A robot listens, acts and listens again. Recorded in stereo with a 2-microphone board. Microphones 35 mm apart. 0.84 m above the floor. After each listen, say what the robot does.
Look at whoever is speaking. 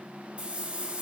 Keep listening.
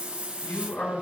Turn 90° left.
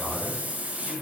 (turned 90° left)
Facing the man speaking, over 4 m away.